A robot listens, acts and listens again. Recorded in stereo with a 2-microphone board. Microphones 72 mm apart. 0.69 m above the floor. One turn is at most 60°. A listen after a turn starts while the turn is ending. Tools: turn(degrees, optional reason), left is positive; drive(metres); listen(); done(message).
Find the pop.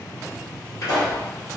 turn(degrees=55, reason="The pop: about 55° left or 125° left.")
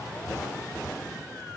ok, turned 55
listen()
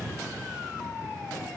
done("I heard a pop, but can't make it out now. It was about straight ahead or 70° left.")